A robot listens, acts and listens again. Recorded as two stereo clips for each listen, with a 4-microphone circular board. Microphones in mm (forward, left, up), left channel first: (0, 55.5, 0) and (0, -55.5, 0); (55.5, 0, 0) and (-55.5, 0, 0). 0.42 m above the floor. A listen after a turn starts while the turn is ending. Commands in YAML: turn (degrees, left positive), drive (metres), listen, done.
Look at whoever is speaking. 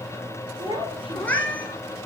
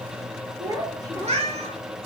turn: -125
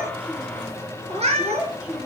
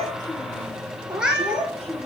turn: -10
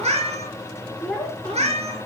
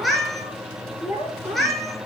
turn: 10
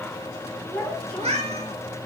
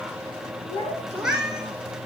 turn: 10
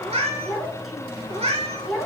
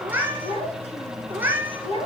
done: "Found it: a child speaking, straight ahead, 2 to 4 m away."